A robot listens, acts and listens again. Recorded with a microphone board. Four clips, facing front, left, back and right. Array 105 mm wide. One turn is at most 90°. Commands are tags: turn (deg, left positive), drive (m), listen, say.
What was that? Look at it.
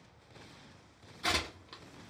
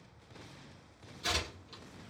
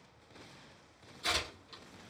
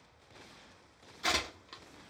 <turn deg="-55"/>
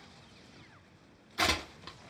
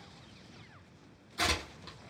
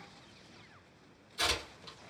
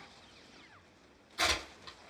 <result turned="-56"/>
<say>Facing the tearing paper, 1 to 2 m away.</say>